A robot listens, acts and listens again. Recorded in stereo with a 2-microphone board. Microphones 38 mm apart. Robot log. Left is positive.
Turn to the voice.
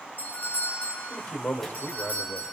note: The man speaking: about 60° left or 120° left.
cmd yaw +60
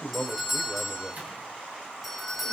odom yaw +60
note: So it is at 30° left.
cmd yaw +30
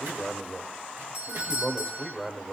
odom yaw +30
end: Found it: a man speaking, straight ahead, 1 to 2 m away.